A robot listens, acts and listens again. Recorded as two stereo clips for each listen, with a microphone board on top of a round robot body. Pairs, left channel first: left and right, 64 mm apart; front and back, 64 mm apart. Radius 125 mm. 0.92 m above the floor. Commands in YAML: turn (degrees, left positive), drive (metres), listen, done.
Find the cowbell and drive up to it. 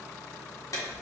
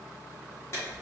listen: true
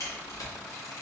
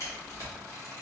listen: true
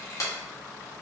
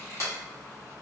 done: "I can't make out a cowbell to turn to."